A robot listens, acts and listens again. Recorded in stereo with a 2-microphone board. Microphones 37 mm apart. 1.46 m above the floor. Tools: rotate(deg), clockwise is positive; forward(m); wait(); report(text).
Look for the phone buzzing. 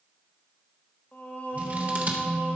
rotate(90)
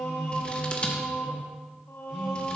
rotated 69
rotate(10)
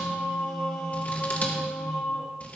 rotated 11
report("Facing the phone buzzing.")